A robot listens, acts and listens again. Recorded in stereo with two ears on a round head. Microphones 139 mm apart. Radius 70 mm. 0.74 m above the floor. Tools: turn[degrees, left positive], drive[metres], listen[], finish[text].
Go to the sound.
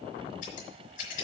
Thought: The scissors: about 50° left or 130° left.
Action: turn[50]
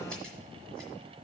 Action: listen[]
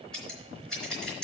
Action: drive[1.0]
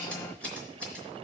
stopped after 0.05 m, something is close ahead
Action: finish[Something is in my way. I am facing the scissors but have not reached it.]